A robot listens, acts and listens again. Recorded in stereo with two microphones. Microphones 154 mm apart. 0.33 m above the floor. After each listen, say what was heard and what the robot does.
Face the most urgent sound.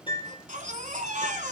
The baby crying: about 60° right or 120° right. Turn 60° right.
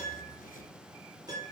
Keep listening.
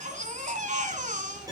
So it is at 60° right. Turn 60° right.
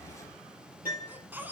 The baby crying is now 15° right. Turn 15° right.
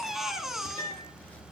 Facing the baby crying.